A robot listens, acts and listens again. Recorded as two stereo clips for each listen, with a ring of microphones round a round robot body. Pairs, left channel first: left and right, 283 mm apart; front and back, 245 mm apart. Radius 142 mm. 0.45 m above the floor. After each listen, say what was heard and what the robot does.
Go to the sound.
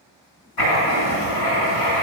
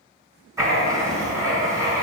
The writing: 105° left. Turn 105° left.
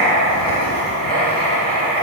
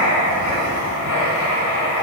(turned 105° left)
The writing is now 25° left. Turn 25° left.
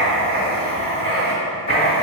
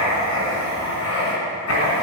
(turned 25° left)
The writing is now 20° left. Turn 20° left.
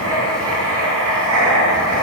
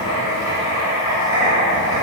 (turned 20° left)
Drive 1.0 m forward.
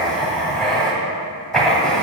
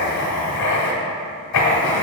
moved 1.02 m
Drive 1.0 m forward.
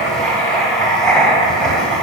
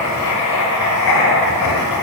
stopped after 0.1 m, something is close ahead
I am next to the writing.